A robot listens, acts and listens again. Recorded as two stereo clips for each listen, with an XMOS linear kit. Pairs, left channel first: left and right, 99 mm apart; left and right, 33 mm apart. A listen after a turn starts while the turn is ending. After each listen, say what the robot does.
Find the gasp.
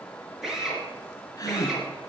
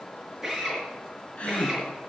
Turn 35° left.
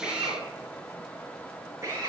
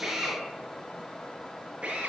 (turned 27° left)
Keep listening.
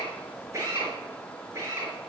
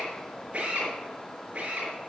I heard a gasp, but can't make it out now. It was about 10° left or 115° left.